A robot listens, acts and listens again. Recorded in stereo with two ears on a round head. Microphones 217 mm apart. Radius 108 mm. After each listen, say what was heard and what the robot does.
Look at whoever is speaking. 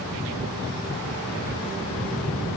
Keep listening.
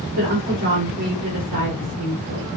The woman speaking: about 75° right or 105° right. Turn 75° right.
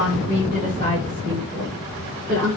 So it is at 35° right. Turn 35° right.
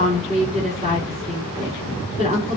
The woman speaking is now 25° right. Turn 25° right.
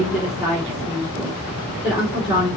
Found it: a woman speaking, straight ahead, over 4 m away.